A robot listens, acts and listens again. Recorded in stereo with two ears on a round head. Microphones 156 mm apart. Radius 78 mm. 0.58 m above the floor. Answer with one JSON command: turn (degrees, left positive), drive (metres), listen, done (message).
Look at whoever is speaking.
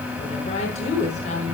{"turn": 40}
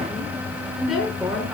{"done": "Facing the woman speaking."}